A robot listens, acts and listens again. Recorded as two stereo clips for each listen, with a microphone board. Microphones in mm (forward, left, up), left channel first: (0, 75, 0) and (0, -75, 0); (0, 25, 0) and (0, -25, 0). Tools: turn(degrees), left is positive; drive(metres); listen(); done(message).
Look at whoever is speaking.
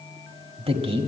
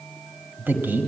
turn(degrees=-40)
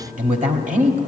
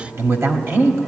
turn(degrees=-100)
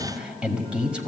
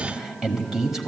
turn(degrees=-10)
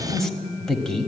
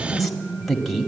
done("Facing the man speaking, 1 to 2 m away.")